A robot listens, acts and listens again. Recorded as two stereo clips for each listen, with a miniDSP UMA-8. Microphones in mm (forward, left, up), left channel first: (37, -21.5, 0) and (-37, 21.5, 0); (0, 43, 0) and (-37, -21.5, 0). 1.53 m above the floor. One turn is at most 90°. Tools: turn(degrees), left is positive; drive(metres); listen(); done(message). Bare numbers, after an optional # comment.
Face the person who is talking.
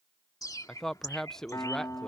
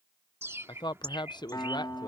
# The man speaking: 55° left.
turn(55)
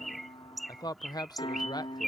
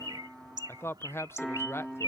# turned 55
done("Found it: a man speaking, straight ahead.")